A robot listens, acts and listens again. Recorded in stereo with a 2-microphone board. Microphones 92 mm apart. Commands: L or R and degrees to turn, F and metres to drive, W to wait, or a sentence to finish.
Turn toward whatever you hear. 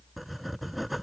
L30
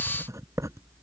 R35
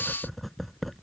Facing the writing.